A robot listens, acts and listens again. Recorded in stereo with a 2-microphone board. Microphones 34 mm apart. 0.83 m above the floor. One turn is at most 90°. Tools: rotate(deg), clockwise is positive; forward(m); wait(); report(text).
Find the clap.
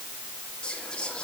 wait()
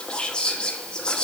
wait()
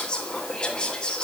report("I can't make out a clap, only whispering.")